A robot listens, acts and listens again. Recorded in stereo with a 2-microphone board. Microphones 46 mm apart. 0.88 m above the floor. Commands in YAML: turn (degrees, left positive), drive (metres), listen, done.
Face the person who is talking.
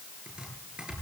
listen: true
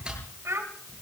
turn: -90
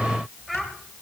done: "Found it: a child speaking, straight ahead, 2 to 4 m away."